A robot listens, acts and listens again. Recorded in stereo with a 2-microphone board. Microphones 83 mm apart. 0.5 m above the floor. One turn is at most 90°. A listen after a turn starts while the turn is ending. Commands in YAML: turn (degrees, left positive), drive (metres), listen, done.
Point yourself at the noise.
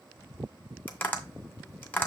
turn: 25
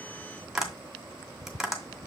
done: "Found it: tapping, straight ahead."